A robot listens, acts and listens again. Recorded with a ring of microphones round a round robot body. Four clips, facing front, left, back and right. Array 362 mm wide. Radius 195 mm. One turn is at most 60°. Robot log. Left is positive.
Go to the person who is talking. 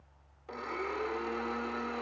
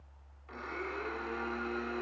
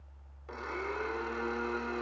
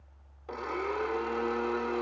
cmd idle
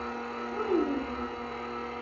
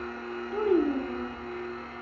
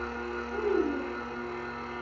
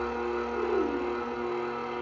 note: The child speaking: 75° left.
cmd yaw +60
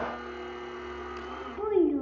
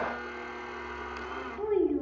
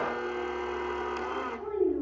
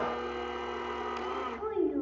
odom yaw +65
cmd fwd 1.0
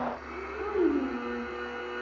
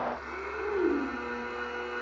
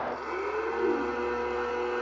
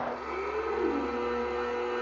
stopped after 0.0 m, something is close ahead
note: The child speaking is now 10° left.
cmd yaw +10
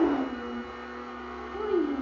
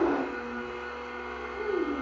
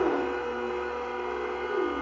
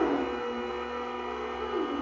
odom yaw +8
end: Blocked. The child speaking is further on, straight ahead.